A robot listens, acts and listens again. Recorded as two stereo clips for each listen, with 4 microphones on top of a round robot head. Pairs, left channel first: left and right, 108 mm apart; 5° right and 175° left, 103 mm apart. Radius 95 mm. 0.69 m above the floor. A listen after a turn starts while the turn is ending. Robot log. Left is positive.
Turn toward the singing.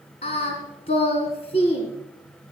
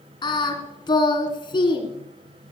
note: The singing: 40° left.
cmd yaw +40
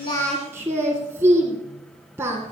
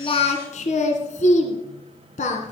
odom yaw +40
note: The singing is now 15° right.
cmd yaw -15
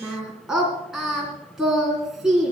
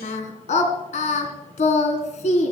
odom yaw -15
end: Found it: singing, straight ahead.